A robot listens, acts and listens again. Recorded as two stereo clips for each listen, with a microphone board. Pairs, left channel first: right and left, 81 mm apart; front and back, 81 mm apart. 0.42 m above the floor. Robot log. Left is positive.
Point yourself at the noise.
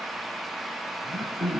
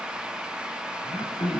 end: Facing the throat clearing, 2 to 4 m away.